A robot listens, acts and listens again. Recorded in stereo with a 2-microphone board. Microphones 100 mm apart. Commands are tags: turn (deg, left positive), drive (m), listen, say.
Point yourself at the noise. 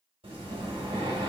<turn deg="-75"/>
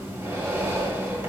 <turn deg="-30"/>
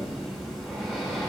<say>Facing the breathing, 2 to 4 m away.</say>